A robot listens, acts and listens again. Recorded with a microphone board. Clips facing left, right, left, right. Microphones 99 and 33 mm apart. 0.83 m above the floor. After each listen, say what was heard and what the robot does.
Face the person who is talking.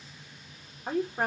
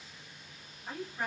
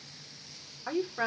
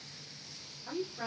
The woman speaking: about 50° left or 130° left. Turn 50° left.
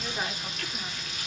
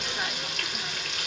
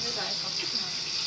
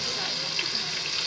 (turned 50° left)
Keep listening.
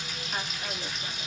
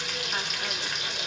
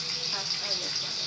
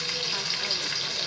Keep listening.
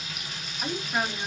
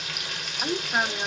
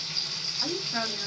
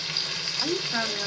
So it is at 30° right. Turn 30° right.
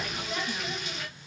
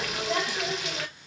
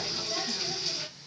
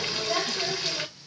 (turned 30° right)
Keep listening.
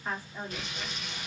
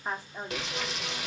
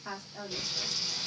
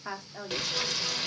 The woman speaking is now 20° right. Turn 20° right.
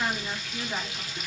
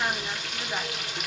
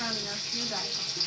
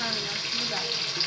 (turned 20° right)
Keep listening.
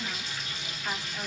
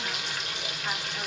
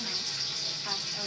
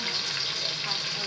Keep listening.
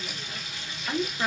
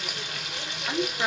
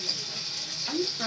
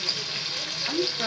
Found it: a woman speaking, straight ahead.